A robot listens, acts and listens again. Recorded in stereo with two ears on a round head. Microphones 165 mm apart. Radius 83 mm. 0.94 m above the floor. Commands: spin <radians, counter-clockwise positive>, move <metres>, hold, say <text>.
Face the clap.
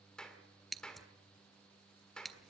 spin 0.52
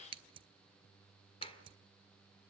hold
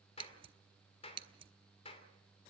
spin 2.53
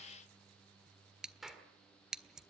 say Found it: a clap, straight ahead, 2 to 4 m away.